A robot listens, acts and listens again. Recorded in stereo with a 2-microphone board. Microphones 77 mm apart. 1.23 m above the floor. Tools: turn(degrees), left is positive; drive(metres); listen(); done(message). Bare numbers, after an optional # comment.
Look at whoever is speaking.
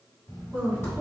# The woman speaking: about 20° right or 160° right.
turn(-20)
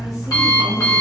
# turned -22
listen()
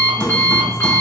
listen()
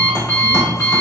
done("I heard a woman speaking, but can't make it out now. It was about straight ahead or 140° right.")